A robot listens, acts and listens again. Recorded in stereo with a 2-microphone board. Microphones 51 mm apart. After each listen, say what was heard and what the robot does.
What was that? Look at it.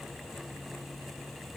Keep listening.
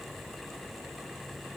Keep listening.
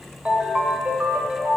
The ringtone: about 25° right or 155° right. Turn 25° right.
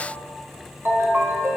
So it is at 130° right. Turn 130° right.
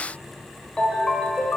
The ringtone is now 25° left. Turn 25° left.
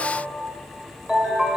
The ringtone is now 20° right. Turn 20° right.
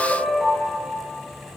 Found it: a ringtone, straight ahead, 1 to 2 m away.